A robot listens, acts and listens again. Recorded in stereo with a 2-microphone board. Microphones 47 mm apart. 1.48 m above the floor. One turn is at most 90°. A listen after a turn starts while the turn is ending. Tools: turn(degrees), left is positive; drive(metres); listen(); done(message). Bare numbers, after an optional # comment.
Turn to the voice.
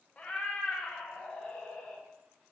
listen()
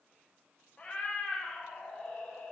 listen()
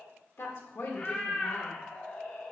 # The woman speaking: about 65° left or 115° left.
turn(65)
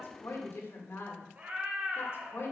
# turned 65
# So it is at 50° left.
turn(50)
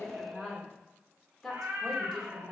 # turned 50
done("Found it: a woman speaking, straight ahead.")